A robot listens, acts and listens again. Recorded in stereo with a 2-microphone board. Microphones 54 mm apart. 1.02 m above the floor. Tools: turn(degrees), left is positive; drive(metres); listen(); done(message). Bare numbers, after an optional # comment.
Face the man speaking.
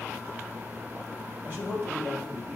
# The man speaking: about 35° right or 145° right.
turn(-35)
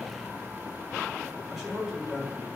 done("Found it: a man speaking, straight ahead, 2 to 4 m away.")